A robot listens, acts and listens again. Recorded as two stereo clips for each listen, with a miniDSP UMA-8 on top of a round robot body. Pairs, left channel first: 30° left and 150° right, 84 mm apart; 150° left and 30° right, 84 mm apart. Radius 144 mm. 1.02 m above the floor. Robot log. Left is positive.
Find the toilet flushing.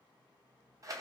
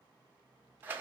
cmd idle
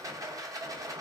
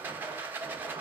cmd idle
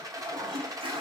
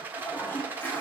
note: The toilet flushing: 140° right.
cmd yaw -140
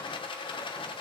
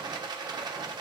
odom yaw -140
cmd idle
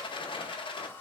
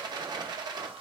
note: The toilet flushing is now 35° right.
cmd yaw -35
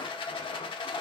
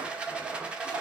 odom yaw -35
cmd idle
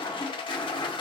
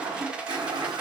end: Facing the toilet flushing, 1 to 2 m away.